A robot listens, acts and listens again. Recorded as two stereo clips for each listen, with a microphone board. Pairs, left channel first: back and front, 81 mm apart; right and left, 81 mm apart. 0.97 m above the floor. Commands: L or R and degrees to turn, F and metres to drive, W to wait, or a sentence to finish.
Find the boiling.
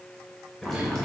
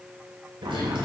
L95
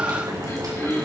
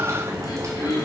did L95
L40
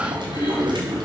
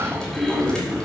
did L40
R10
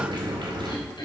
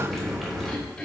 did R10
Facing the boiling.